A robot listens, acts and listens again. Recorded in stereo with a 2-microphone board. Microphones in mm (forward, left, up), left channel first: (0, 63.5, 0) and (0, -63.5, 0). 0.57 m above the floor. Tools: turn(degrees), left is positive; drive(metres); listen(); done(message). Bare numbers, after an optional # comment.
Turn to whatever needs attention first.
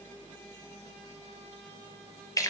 listen()
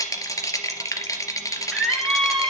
turn(30)
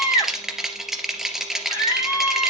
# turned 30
# So it is at 145° left.
turn(145)
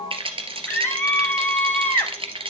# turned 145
# The scream is now 15° left.
turn(15)
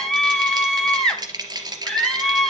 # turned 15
done("Facing the scream.")